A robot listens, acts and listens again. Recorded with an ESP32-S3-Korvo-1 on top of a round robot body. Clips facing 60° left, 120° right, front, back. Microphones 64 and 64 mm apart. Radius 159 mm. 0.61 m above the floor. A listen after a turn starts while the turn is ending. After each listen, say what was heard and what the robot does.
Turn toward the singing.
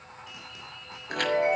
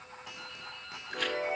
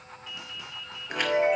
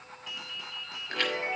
Keep listening.
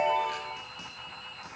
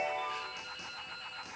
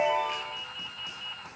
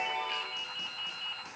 Keep listening.
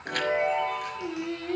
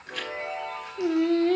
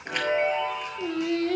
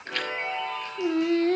The singing: 135° right. Turn 135° right.
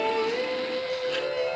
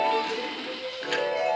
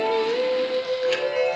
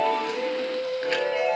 The singing is now 25° left. Turn 25° left.
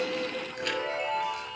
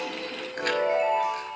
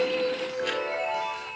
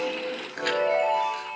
Keep listening.
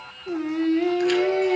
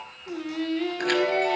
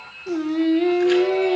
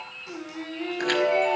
Found it: singing, straight ahead, 2 to 4 m away.